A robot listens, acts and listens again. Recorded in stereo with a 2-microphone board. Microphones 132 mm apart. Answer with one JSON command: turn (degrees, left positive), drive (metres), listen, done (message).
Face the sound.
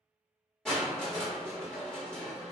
{"turn": 30}
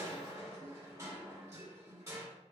{"turn": -25}
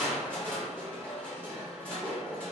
{"turn": 10}
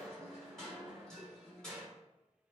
{"done": "Facing the crushing."}